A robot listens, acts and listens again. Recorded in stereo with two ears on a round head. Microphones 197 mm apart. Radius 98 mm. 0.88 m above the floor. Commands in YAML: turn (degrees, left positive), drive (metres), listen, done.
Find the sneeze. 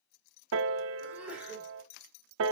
turn: -30
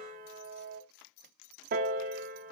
listen: true
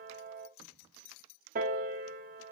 done: "I heard a sneeze, but can't make it out now. It was about 25° left or 145° right."